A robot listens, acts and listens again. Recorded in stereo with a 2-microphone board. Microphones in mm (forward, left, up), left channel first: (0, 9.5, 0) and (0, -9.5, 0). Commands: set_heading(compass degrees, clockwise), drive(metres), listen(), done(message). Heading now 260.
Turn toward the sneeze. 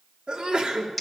set_heading(325)
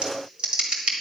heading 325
listen()
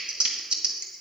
done("I heard a sneeze, but can't make it out now. It was about straight ahead or 50° right.")